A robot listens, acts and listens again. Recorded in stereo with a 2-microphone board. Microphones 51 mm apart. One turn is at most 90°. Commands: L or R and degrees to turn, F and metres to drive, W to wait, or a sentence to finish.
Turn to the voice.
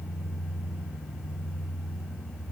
W
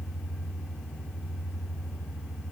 W
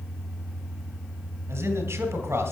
R75
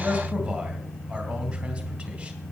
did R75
R20
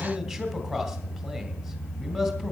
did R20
Found it: a man speaking, straight ahead, 2 to 4 m away.